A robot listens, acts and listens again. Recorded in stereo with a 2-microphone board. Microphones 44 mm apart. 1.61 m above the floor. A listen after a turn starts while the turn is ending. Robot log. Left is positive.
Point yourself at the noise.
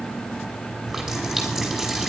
cmd yaw -30
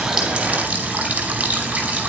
note: So it is at 150° right.
cmd yaw -150
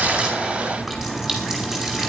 note: The running tap is now 10° right.
cmd yaw -10
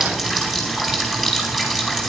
end: Facing the running tap.